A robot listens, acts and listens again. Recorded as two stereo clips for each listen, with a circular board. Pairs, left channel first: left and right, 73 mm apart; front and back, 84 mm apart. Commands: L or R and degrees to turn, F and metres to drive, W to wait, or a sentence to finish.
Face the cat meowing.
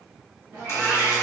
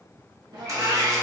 R150
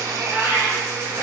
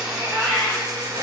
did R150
R65
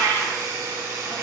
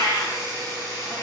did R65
L15
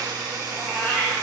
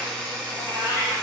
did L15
Facing the cat meowing.